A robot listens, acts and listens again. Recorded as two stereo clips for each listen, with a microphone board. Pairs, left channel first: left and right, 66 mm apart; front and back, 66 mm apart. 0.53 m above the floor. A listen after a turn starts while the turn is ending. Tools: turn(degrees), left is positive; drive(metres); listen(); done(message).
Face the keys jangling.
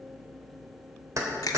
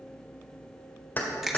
turn(degrees=-60)
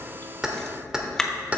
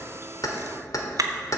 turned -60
turn(degrees=-25)
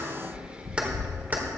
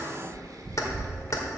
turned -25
listen()
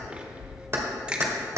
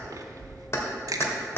turn(degrees=-50)
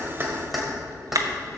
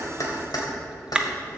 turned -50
done("Facing the keys jangling, 2 to 4 m away.")